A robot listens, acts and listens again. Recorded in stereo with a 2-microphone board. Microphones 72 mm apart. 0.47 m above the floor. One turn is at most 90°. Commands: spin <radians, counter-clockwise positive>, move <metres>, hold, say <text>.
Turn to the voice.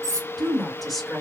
spin 0.52
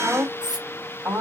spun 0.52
spin -0.52
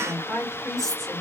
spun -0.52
say Found it: a woman speaking, straight ahead, 2 to 4 m away.